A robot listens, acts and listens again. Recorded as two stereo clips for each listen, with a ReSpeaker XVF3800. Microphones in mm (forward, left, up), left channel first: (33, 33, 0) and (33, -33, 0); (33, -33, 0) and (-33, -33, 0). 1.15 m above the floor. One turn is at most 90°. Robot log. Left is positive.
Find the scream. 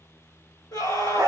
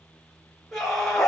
note: The scream: 90° left.
cmd yaw +90
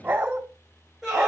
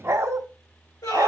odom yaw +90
end: Facing the scream.